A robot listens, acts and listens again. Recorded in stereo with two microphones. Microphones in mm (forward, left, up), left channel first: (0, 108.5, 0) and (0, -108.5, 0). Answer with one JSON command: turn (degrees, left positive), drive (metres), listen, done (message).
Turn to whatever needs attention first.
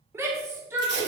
{"turn": -30}
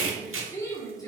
{"turn": 20}
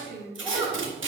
{"done": "Found it: a shout, straight ahead, 1 to 2 m away."}